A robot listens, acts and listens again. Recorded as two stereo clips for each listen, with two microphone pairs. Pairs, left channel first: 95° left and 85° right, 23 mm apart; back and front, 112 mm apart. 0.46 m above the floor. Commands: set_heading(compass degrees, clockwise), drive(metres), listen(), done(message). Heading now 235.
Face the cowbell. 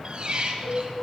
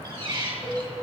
set_heading(130)
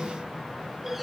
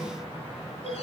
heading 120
set_heading(130)
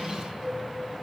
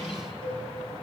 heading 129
done("Facing the cowbell, 2 to 4 m away.")